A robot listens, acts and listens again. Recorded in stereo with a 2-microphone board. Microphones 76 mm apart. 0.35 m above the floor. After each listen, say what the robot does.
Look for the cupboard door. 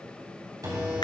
Turn 55° right.
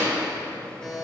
Keep listening.
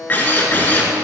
Keep listening.
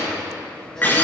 I heard a cupboard door, but can't make it out now. It was about straight ahead or 70° right.